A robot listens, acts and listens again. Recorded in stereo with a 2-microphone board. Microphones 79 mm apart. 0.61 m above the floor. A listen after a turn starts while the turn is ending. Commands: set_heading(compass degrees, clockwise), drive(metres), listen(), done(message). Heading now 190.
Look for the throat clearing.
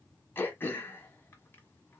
set_heading(165)
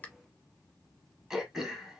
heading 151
set_heading(161)
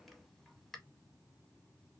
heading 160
done("Facing the throat clearing.")